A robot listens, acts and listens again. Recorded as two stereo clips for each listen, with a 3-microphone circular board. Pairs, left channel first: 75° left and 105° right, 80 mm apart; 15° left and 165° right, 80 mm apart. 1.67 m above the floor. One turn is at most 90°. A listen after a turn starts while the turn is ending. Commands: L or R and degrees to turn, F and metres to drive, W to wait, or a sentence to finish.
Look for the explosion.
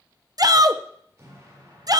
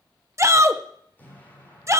R50
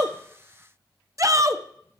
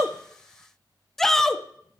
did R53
I heard an explosion from this way, but can't make it out now.